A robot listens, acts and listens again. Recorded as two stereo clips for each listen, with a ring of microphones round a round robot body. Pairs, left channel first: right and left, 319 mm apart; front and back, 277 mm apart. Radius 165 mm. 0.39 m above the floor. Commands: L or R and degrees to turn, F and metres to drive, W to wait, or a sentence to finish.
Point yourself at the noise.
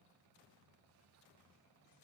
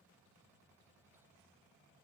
W
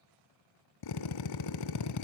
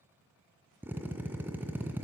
R95
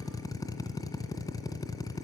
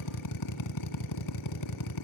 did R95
R10
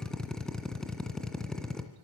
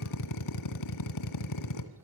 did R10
Facing the drill, 1 to 2 m away.